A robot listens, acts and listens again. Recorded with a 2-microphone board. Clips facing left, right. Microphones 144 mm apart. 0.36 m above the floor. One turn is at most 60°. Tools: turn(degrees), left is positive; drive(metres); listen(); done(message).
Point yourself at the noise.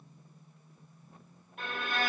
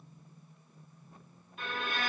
turn(degrees=60)
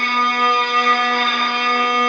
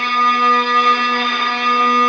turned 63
done("Facing the violin, 1 to 2 m away.")